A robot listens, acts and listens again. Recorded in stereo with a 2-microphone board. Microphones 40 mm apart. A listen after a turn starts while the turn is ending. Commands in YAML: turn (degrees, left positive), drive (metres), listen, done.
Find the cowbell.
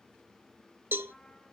turn: -65
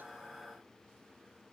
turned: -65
turn: -30
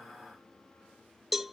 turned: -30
turn: -10
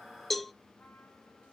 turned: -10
done: "Found it: a cowbell, straight ahead, under 1 m away."